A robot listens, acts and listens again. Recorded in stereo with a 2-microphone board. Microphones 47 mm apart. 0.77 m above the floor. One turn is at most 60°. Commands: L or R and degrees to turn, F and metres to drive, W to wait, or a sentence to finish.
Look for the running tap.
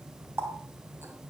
R60
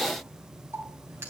R60
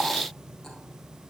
W
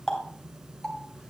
L10
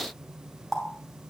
Facing the running tap.